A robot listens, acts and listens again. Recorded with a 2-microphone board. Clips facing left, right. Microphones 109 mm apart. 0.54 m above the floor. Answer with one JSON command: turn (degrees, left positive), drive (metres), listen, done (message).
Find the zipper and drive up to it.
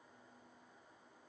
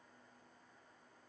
{"listen": true}
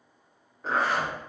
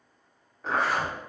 {"turn": 30}
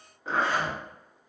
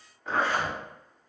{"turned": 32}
{"turn": 145}
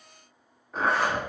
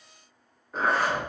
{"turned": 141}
{"drive": 1.0}
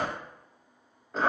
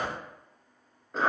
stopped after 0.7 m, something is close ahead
{"done": "Arrived at the zipper, straight ahead."}